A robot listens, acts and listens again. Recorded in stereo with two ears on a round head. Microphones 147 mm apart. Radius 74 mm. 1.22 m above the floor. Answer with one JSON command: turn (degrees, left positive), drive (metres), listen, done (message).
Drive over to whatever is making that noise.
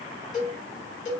{"turn": 50}
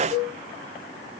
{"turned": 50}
{"turn": 70}
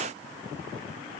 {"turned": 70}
{"listen": true}
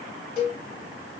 {"turn": 35}
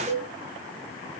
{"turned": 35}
{"turn": -10}
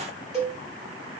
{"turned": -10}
{"drive": 1.0}
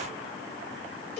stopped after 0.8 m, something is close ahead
{"done": "Arrived at the cowbell, straight ahead."}